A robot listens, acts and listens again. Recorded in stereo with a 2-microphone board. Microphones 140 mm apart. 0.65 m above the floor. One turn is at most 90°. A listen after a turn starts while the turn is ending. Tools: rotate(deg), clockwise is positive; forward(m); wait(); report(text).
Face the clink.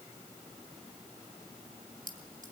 rotate(70)
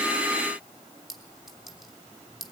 report("Found it: a clink, straight ahead, 2 to 4 m away.")